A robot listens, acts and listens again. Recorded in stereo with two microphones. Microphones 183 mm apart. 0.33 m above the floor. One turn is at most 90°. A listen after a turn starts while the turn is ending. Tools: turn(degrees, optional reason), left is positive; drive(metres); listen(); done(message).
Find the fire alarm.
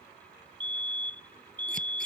turn(degrees=-90)
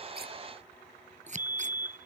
turn(degrees=-10, reason="So it is at 10° right.")
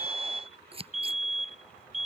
done("Found it: a fire alarm, straight ahead.")